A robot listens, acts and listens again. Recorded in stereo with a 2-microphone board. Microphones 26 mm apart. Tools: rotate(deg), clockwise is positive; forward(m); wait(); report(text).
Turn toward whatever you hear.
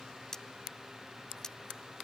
rotate(-25)
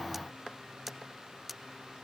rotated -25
report("Facing the cutlery clinking.")